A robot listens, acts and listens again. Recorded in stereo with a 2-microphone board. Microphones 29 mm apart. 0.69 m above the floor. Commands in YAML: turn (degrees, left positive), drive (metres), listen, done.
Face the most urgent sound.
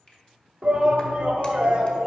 turn: -30
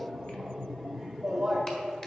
done: "Found it: a shout, straight ahead."